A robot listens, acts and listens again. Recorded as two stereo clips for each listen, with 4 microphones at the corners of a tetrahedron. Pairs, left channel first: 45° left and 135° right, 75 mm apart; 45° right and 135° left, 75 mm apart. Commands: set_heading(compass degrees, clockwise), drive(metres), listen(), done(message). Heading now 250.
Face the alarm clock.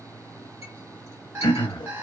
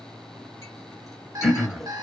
set_heading(80)
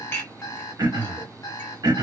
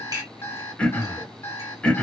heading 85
done("Found it: an alarm clock, straight ahead, under 1 m away.")